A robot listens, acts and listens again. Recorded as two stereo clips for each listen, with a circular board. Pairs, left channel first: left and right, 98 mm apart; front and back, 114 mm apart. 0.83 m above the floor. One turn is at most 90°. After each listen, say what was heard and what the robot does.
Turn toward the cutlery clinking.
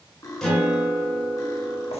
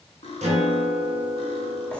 The cutlery clinking: 30° left. Turn 30° left.
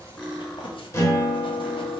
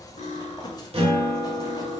Facing the cutlery clinking.